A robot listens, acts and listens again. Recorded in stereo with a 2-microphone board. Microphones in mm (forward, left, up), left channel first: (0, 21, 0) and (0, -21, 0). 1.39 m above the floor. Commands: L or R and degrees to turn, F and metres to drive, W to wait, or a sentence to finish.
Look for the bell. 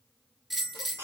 R30
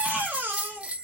R145
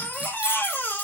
W
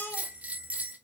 R40
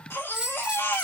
R20
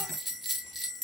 Found it: a bell, straight ahead.